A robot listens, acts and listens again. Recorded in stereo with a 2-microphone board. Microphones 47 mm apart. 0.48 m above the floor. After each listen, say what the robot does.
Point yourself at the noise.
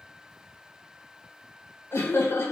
Turn 60° left.
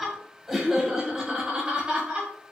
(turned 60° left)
Turn 25° right.
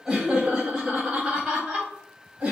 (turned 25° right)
Turn 15° right.
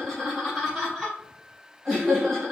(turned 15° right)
Facing the laughter.